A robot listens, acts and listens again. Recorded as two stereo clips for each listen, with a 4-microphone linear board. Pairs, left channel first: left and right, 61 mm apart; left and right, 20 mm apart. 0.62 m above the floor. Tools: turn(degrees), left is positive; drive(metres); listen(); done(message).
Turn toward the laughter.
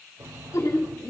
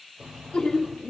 turn(degrees=70)
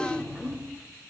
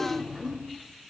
done("Facing the laughter, 2 to 4 m away.")